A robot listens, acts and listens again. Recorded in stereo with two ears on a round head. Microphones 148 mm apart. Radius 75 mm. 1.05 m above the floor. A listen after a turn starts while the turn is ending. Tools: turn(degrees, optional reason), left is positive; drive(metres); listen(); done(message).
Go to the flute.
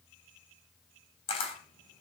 listen()
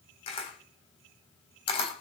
listen()
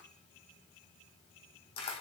done("I can't make out a flute to turn to.")